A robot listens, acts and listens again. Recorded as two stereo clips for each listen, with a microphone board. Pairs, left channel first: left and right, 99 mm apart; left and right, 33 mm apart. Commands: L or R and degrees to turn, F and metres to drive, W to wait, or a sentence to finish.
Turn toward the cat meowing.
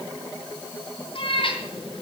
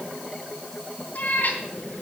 L65
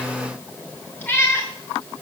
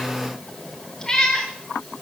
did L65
L25
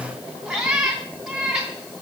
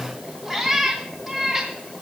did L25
R10
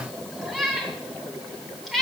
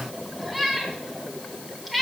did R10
Facing the cat meowing.